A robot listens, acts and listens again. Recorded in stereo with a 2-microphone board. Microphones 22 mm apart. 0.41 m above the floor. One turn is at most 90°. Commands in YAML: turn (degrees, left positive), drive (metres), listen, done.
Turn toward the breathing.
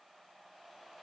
listen: true
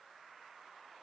listen: true
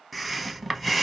turn: 30
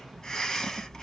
turn: 90
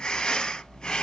turn: 45
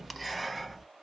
done: "Found it: breathing, straight ahead."